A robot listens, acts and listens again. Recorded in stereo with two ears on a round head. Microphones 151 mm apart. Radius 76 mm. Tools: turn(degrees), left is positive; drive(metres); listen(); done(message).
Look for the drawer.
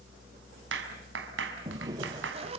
turn(degrees=-25)
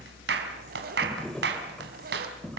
done("Facing the drawer.")